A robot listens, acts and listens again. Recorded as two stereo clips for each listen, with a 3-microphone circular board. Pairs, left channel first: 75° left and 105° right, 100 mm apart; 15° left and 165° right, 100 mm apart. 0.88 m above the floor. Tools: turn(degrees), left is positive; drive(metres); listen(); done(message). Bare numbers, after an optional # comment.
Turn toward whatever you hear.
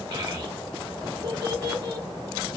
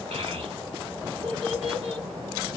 # The child speaking: 145° right.
turn(-145)
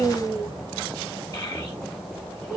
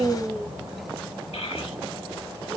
# The child speaking is now 25° left.
turn(25)
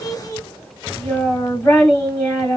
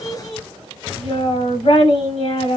# The child speaking is now 15° left.
turn(15)
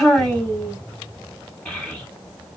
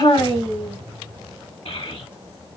done("Found it: a child speaking, straight ahead, 1 to 2 m away.")